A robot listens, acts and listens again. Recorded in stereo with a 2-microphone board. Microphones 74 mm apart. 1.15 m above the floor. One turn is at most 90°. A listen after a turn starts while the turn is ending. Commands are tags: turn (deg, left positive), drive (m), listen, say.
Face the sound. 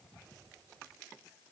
<listen/>
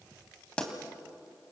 <turn deg="30"/>
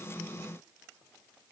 <listen/>
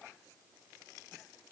<say>I heard a pop, but can't make it out now. It was about 15° right or 135° left.</say>